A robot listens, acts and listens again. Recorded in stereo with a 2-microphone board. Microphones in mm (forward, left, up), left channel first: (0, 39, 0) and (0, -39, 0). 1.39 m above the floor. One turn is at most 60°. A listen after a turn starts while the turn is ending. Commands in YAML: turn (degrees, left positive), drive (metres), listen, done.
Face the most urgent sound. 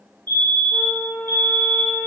turn: -60
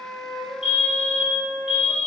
turn: -10
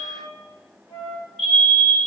done: "Facing the fire alarm, 1 to 2 m away."